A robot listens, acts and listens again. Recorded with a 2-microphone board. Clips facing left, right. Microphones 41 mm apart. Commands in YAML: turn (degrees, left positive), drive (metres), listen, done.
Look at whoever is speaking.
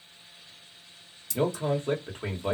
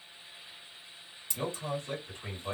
turn: 55
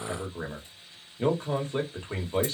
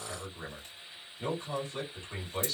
turn: 55
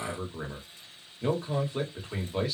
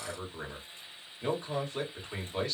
done: "Facing the man speaking, 1 to 2 m away."